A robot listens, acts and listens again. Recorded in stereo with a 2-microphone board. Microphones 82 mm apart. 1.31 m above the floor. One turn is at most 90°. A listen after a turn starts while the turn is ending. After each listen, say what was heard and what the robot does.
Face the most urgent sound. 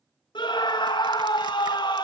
Turn 90° left.
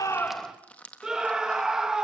So it is at 10° right. Turn 10° right.
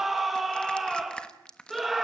Found it: a scream, straight ahead, 2 to 4 m away.